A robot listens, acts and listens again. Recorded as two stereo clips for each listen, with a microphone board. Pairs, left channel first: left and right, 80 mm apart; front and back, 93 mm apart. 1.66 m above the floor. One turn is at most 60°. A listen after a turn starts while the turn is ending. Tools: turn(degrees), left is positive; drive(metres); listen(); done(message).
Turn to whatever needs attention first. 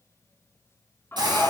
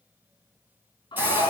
turn(degrees=25)
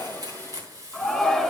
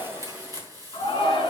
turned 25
done("Found it: a shout, straight ahead, 2 to 4 m away.")